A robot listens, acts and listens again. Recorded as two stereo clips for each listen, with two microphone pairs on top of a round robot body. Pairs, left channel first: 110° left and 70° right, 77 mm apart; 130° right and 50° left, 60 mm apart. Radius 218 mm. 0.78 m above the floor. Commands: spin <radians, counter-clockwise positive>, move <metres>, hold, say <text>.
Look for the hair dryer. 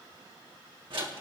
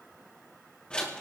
hold
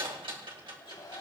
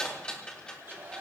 spin 1.66
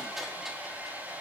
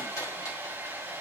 say Found it: a hair dryer, straight ahead.